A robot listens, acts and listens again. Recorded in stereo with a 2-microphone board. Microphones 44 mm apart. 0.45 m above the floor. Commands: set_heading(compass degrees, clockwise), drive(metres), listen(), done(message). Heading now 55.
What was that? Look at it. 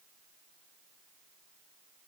listen()
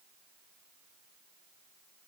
listen()
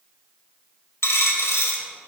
set_heading(340)
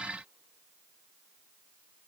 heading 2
listen()
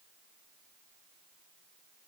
done("I heard a dropped coin, but can't make it out now. It was about 20° left or 55° left.")